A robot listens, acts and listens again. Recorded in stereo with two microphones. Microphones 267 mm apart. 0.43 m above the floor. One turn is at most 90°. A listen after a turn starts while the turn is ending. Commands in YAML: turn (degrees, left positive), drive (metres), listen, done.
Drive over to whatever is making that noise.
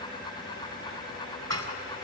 turn: -65
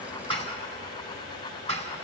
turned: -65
turn: -50
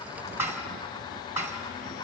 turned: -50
turn: -10
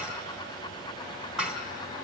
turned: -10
drive: 1.0
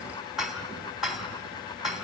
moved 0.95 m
drive: 1.0
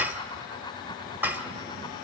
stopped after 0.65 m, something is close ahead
turn: -10
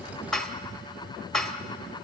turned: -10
done: "I am next to the dishes clattering."